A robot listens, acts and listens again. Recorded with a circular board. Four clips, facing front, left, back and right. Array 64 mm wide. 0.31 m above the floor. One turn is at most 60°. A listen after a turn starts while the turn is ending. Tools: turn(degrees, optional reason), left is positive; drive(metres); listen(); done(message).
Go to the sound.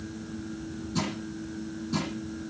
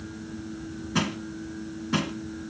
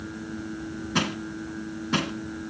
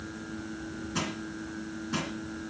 turn(degrees=60, reason="The crushing: 155° left.")
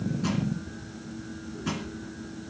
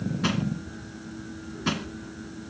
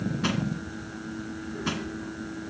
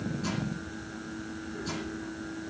turn(degrees=60, reason="The crushing is now 110° left.")
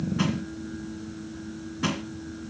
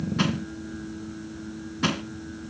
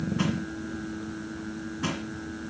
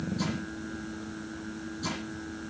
turn(degrees=60, reason="The crushing is now 80° left.")
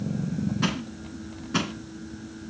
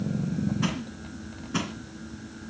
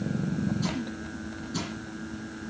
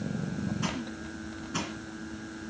turn(degrees=15, reason="The crushing is now 15° left.")
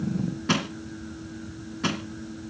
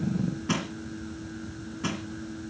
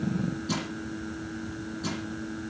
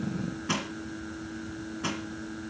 drive(metres=1.0)
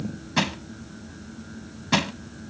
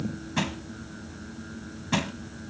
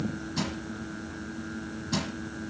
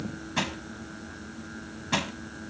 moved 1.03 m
drive(metres=1.0)
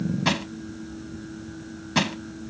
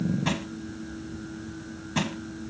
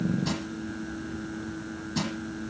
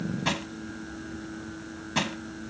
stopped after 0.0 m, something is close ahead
turn(degrees=-10, reason="The crushing is now 10° right.")
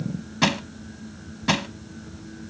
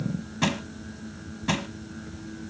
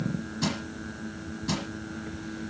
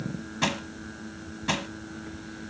done("Arrived at the crushing, straight ahead.")